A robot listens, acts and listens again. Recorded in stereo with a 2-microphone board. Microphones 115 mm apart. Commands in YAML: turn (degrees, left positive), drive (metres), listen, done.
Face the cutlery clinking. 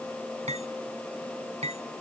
turn: -90
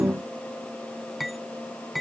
done: "Facing the cutlery clinking."